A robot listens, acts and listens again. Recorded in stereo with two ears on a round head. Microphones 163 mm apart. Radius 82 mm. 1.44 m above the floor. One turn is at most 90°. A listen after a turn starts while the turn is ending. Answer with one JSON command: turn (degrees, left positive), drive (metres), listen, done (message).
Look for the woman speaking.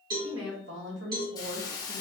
{"turn": -65}
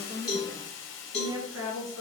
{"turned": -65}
{"turn": -75}
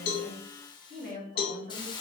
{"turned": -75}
{"turn": -45}
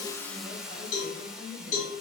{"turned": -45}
{"turn": -20}
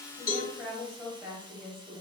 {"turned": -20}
{"done": "Found it: a woman speaking, straight ahead."}